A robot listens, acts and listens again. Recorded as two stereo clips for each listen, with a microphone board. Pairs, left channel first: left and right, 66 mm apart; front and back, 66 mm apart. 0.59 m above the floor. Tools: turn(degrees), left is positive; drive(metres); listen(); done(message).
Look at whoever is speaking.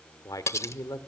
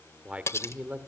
turn(degrees=110)
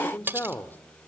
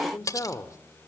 turn(degrees=30)
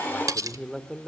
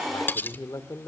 done("Found it: a man speaking, straight ahead, 1 to 2 m away.")